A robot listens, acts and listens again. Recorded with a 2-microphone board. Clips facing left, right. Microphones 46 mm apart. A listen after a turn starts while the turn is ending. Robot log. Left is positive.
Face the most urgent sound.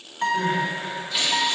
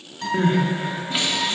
note: The crying: about 30° right or 150° right.
cmd yaw -30
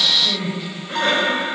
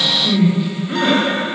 note: So it is at 10° right.
cmd yaw -10
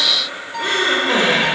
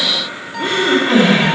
end: Found it: crying, straight ahead.